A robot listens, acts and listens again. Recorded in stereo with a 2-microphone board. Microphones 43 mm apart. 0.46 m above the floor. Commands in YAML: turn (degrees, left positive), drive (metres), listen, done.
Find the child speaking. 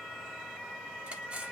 listen: true
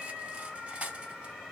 listen: true
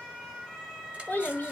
turn: 45
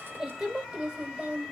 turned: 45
turn: -20
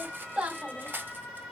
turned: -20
turn: -15
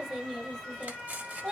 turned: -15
done: "Facing the child speaking."